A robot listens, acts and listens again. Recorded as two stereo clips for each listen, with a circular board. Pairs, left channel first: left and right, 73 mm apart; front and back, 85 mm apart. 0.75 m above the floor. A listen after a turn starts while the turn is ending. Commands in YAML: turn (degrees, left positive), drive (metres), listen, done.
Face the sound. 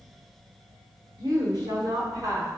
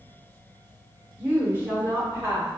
turn: -125
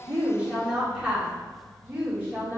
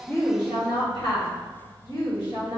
turn: -30
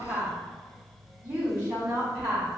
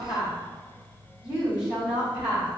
turn: -25
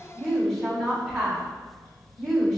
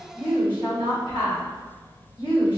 done: "Facing the woman speaking, 1 to 2 m away."